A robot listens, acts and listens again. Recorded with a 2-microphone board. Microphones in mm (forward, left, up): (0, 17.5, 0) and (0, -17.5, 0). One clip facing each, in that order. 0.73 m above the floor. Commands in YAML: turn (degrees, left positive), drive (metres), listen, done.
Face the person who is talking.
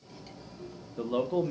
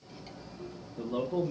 turn: 55
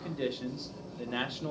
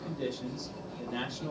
turn: 45
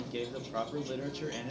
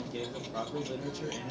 turn: 25
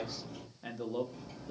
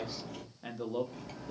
done: "Facing the man speaking."